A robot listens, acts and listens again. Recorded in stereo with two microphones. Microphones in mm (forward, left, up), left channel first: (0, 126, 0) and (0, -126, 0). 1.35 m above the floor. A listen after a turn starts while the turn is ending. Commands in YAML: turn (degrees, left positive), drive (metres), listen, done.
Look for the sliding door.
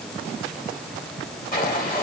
turn: 35
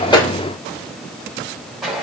done: "Found it: a sliding door, straight ahead, 1 to 2 m away."